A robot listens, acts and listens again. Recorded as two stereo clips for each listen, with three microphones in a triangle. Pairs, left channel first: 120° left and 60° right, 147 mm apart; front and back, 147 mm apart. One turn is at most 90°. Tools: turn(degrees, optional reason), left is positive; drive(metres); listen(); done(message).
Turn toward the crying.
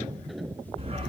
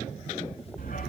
listen()
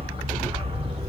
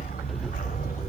listen()
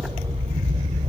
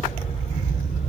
done("I can't make out crying, only a dog barking.")